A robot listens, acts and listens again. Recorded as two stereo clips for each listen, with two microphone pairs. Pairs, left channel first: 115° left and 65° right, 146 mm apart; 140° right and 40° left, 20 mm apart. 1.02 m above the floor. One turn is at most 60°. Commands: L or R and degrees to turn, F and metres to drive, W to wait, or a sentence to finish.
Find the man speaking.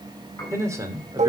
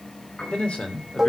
R60
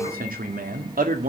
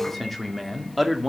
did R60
R45
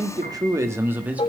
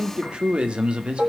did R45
L10
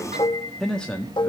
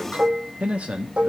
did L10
L35
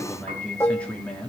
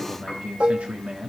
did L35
L30
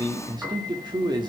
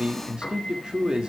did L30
R10
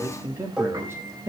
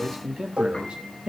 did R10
Found it: a man speaking, straight ahead.